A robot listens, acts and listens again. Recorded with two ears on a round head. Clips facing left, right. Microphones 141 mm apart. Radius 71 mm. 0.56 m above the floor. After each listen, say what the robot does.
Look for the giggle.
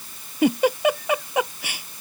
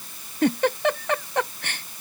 Turn 30° left.
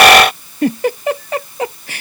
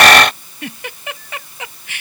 Turn 145° left.
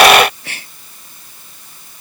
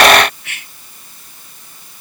Turn 30° left.
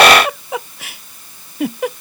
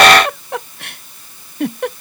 Found it: a giggle, straight ahead.